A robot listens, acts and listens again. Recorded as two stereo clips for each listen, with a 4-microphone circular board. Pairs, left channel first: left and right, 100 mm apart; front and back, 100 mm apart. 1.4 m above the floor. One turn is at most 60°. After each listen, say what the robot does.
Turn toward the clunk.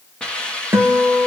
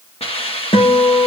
Keep listening.
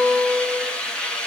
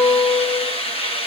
Keep listening.
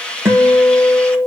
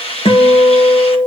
I can't make out a clunk to turn to.